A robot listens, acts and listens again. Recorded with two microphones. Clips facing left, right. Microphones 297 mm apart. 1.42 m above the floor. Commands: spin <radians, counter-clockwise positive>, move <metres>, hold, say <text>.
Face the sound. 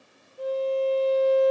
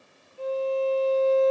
spin 0.26
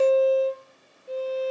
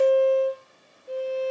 say Facing the violin.